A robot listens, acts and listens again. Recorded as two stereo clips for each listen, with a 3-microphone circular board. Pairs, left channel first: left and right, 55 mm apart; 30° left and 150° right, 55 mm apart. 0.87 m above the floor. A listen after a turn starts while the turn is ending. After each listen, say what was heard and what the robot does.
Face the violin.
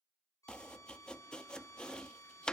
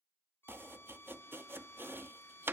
The violin: 75° left. Turn 75° left.
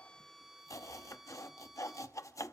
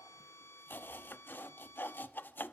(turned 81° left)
Facing the violin.